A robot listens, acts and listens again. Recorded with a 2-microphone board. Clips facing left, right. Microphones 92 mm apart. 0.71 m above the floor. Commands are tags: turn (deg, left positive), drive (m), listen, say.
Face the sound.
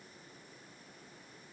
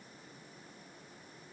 <listen/>
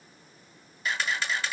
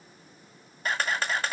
<turn deg="-45"/>
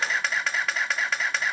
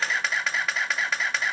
<say>Facing the camera shutter, 1 to 2 m away.</say>